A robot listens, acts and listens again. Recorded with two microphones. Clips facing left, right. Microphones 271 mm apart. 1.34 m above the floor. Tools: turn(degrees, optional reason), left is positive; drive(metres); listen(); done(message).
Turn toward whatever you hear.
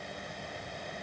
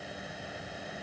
listen()
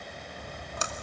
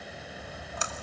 turn(degrees=50, reason="The splash: about 50° left or 130° left.")
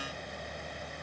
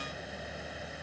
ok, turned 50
listen()
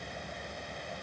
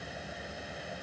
done("I heard a splash, but can't make it out now. It was about straight ahead or 80° left.")